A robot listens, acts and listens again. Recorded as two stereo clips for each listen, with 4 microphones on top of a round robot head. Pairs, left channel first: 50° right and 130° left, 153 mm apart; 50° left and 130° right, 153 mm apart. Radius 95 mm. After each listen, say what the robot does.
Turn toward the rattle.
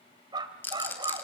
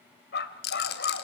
Turn 30° left.
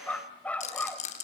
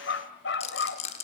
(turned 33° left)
Found it: a rattle, straight ahead, over 4 m away.